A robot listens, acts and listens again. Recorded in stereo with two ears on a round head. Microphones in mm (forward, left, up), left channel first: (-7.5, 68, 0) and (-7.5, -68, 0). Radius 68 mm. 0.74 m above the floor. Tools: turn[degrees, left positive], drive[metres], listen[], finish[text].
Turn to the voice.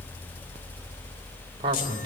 Thought: The man speaking: about 35° right or 145° right.
Action: turn[-35]
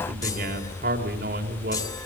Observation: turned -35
Thought: So it is at 110° right.
Action: turn[-110]
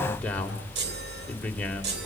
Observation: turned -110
Thought: The man speaking is now 10° left.
Action: turn[10]
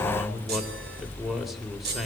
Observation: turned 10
Action: finish[Found it: a man speaking, straight ahead, 2 to 4 m away.]